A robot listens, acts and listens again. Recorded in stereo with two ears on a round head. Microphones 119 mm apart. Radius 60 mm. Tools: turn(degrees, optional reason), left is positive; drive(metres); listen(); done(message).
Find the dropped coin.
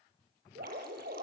listen()
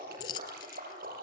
turn(degrees=35, reason="The dropped coin: about 35° left or 145° left.")
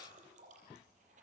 listen()
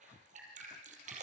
done("I heard a dropped coin, but can't make it out now. It was about straight ahead or 110° left.")